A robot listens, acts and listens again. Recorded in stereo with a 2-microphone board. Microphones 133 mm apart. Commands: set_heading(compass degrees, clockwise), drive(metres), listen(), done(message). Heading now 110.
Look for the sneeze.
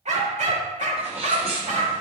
set_heading(160)
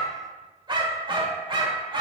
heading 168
listen()
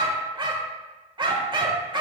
done("I heard a sneeze, but can't make it out now. It was about 5° left or 70° right.")